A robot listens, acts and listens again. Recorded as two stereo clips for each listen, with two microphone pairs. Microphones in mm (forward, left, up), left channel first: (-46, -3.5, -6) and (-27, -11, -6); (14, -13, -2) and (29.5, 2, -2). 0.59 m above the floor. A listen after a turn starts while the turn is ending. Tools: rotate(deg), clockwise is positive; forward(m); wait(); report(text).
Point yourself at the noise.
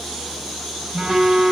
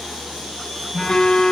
rotate(95)
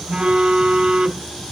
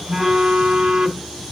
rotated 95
report("Facing the phone buzzing.")